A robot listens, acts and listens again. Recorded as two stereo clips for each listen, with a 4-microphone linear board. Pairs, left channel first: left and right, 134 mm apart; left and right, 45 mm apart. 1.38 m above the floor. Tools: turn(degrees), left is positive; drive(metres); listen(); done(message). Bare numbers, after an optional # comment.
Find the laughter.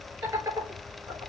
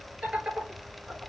# The laughter: about 30° right or 150° right.
turn(-30)
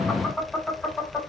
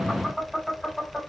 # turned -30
# So it is at 10° right.
turn(-10)
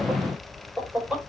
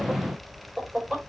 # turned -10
# The laughter is now 10° right.
turn(-10)
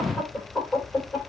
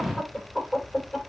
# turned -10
# The laughter is now 10° right.
turn(-10)
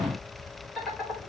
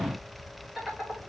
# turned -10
done("Facing the laughter, over 4 m away.")